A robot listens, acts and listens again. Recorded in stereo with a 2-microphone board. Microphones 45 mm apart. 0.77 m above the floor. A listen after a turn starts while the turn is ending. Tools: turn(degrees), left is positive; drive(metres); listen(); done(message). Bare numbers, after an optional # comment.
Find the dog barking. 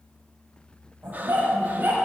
# The dog barking: about 40° right or 140° right.
turn(-40)
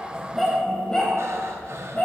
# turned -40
# So it is at 30° left.
turn(30)
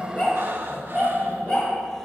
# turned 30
# The dog barking is now 25° left.
turn(25)
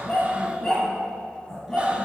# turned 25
# The dog barking is now 10° left.
turn(10)
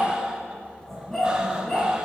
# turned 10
done("Found it: a dog barking, straight ahead.")